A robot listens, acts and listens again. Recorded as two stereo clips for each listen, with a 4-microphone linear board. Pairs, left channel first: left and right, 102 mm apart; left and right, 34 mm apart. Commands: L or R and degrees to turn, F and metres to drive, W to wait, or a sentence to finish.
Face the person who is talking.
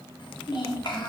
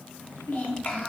L50
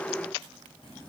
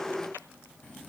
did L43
W
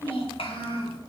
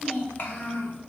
L80
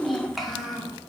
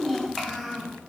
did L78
Found it: a child speaking, straight ahead, under 1 m away.